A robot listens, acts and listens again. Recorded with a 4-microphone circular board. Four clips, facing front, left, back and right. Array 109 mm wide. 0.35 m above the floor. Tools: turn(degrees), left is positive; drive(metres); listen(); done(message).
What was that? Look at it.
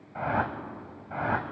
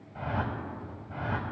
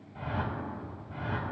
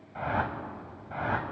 turn(degrees=-20)
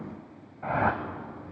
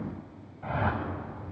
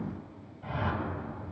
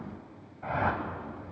done("Found it: a whoosh, straight ahead.")